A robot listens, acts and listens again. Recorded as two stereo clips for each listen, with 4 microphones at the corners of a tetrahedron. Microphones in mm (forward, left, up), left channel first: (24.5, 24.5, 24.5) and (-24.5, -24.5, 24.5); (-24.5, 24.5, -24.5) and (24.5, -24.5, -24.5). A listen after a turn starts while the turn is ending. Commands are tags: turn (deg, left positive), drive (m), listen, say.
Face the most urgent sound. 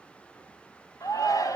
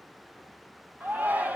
<turn deg="20"/>
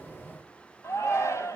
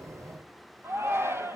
<say>Facing the shout.</say>